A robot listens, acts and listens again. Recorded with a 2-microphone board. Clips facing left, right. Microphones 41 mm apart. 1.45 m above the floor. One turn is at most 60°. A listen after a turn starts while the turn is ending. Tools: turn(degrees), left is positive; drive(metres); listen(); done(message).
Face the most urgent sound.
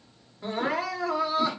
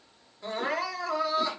turn(degrees=30)
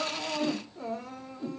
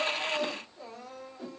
turn(degrees=60)
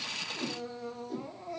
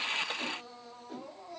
turn(degrees=60)
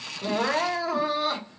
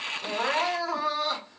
done("Facing the crying, under 1 m away.")